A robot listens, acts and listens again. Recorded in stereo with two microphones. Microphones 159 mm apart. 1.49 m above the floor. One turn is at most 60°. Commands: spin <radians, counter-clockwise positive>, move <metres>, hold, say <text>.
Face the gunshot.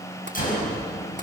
spin 1.05
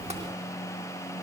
hold
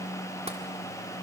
say I heard a gunshot, but can't make it out now. It was about straight ahead or 60° left.